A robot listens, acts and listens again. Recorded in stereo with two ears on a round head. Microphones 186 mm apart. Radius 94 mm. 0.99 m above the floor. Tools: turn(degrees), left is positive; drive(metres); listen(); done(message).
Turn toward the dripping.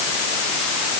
listen()
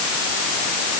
listen()
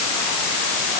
done("I can't make out dripping.")